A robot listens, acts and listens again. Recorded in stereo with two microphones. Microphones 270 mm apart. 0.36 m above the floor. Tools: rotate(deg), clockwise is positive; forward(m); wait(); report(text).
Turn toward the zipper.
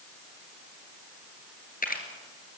wait()
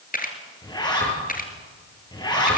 rotate(-15)
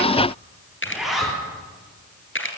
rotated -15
report("Facing the zipper.")